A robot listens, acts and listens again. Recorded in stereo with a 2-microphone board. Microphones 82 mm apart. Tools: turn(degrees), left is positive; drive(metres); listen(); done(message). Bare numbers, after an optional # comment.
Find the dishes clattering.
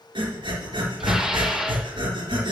turn(-30)
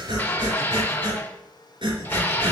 # So it is at 25° left.
turn(25)
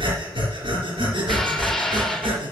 done("Found it: dishes clattering, straight ahead, under 1 m away.")